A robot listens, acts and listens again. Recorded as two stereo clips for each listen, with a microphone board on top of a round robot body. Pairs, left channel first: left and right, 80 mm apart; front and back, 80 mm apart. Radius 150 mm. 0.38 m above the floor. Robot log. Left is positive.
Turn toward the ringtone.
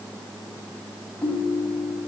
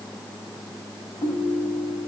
note: The ringtone: 30° left.
cmd yaw +30
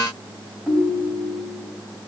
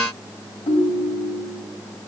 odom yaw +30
end: Found it: a ringtone, straight ahead, 2 to 4 m away.